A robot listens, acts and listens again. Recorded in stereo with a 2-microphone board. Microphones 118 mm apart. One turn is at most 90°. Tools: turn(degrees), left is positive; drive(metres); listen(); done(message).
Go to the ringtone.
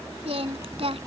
listen()
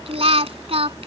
listen()
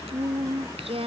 done("I can't make out a ringtone to turn to.")